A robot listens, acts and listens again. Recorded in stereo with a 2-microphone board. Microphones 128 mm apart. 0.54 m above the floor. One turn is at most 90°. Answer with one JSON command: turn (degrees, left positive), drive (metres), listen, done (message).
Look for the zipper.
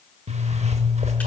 {"turn": -60}
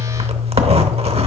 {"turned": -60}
{"turn": -55}
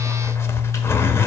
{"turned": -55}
{"turn": 20}
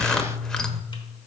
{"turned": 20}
{"done": "Found it: a zipper, straight ahead."}